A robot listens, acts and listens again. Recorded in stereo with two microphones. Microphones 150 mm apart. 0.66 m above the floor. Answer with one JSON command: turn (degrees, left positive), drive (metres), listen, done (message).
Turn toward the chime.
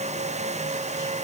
{"listen": true}
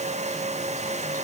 {"listen": true}
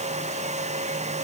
{"done": "I can't make out a chime."}